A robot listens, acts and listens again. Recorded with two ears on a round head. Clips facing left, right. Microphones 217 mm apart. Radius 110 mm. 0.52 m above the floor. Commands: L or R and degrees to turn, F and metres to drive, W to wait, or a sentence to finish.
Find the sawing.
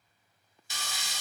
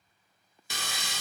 R50
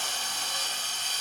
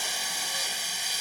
R10
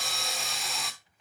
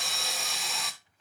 Facing the sawing.